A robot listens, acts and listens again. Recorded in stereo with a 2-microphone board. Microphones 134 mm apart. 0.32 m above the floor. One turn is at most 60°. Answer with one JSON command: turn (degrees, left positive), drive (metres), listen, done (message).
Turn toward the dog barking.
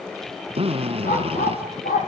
{"turn": 60}
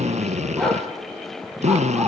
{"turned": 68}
{"done": "Facing the dog barking, over 4 m away."}